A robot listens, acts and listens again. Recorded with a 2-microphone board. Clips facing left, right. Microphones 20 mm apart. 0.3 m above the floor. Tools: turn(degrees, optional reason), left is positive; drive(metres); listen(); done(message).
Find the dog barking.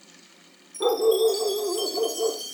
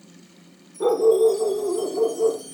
turn(degrees=30)
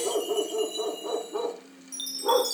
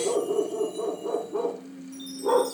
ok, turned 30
turn(degrees=160, reason="So it is at 160° left.")
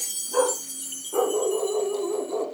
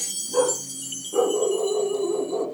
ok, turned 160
turn(degrees=70, reason="The dog barking is now 70° left.")
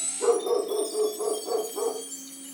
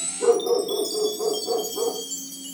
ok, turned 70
turn(degrees=25, reason="The dog barking is now 25° left.")
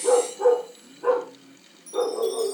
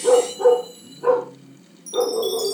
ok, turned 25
done("Found it: a dog barking, straight ahead.")